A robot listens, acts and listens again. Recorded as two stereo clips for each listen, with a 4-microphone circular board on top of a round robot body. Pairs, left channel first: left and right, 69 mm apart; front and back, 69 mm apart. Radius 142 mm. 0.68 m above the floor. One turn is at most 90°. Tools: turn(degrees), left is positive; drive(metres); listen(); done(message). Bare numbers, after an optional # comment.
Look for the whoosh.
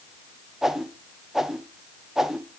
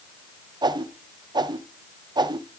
# The whoosh: 175° right.
turn(-90)
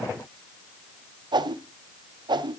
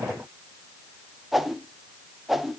# The whoosh is now 95° right.
turn(-90)
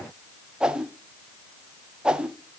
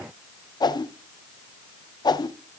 # The whoosh is now 10° right.
turn(-10)
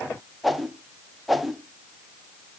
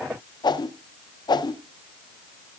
done("Facing the whoosh, under 1 m away.")